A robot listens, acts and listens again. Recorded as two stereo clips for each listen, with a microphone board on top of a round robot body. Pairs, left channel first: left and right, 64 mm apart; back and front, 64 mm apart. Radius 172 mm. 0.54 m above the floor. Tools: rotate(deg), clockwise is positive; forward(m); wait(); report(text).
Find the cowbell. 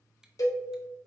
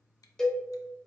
rotate(-100)
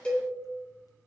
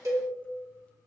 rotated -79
rotate(-20)
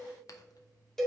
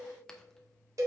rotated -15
report("Found it: a cowbell, straight ahead, 2 to 4 m away.")